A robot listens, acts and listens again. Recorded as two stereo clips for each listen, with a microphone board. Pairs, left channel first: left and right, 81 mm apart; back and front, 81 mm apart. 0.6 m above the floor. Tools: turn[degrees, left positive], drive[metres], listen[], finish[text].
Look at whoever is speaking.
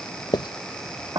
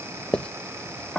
Action: listen[]
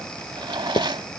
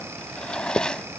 Action: listen[]
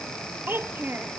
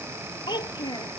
Thought: The child speaking: 155° right.
Action: turn[-155]
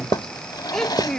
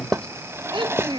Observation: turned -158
Action: finish[Found it: a child speaking, straight ahead.]